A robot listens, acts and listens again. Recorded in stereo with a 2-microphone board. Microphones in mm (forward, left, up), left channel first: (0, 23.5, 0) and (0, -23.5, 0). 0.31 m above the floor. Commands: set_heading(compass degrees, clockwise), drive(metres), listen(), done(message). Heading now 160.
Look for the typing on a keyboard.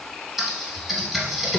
set_heading(190)
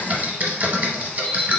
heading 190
set_heading(335)
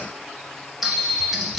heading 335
done("Facing the typing on a keyboard, under 1 m away.")